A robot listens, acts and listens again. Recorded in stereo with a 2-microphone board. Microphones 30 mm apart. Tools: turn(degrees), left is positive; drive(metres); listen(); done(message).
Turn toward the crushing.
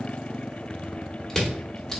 turn(degrees=30)
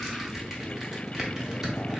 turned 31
listen()
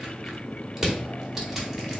turn(degrees=-20)
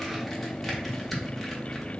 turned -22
listen()
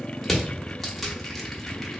done("Found it: crushing, straight ahead, 1 to 2 m away.")